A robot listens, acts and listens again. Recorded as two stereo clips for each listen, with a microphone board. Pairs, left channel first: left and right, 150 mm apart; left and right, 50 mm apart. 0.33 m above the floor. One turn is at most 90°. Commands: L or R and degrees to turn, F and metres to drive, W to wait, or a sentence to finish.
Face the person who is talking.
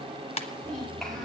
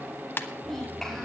L30
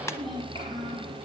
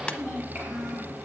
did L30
R35
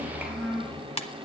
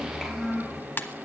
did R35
R10
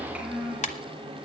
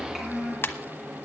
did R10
R10
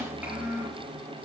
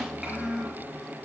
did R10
R15
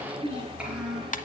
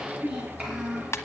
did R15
R10
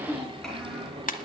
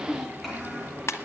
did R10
Facing the child speaking.